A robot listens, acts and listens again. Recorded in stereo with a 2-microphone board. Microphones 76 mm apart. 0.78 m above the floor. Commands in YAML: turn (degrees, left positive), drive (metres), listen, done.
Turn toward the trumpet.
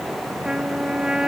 turn: -30
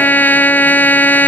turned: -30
turn: 25
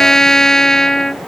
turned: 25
done: "Found it: a trumpet, straight ahead."